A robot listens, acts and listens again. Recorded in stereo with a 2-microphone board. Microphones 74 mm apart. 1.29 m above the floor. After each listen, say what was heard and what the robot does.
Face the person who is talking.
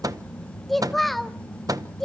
Turn 30° left.
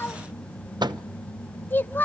So it is at 150° left. Turn 150° left.
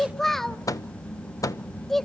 Facing the child speaking, 1 to 2 m away.